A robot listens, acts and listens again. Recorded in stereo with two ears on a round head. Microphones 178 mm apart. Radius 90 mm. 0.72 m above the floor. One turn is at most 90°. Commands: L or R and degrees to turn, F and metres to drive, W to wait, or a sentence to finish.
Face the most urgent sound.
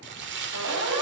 R70
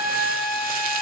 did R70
Found it: a siren, straight ahead.